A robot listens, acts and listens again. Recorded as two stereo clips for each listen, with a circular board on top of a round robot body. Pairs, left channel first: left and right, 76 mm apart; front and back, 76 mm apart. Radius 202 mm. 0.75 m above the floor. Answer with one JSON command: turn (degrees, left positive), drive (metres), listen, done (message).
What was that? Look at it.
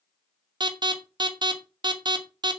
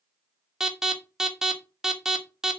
{"turn": -95}
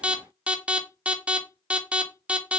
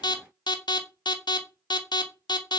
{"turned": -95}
{"turn": -15}
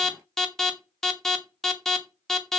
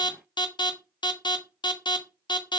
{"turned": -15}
{"done": "Facing the alarm, 2 to 4 m away."}